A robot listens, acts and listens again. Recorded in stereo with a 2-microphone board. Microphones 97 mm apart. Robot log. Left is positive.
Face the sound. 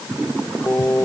note: The singing: about 25° left or 155° left.
cmd yaw +25
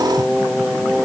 end: Found it: singing, straight ahead.